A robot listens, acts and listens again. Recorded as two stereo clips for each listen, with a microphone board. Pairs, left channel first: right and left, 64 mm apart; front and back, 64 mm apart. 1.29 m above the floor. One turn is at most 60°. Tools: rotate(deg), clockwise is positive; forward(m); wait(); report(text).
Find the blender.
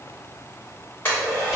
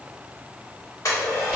rotate(40)
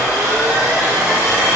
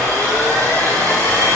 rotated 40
rotate(-15)
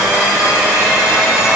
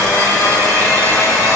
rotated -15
report("Facing the blender.")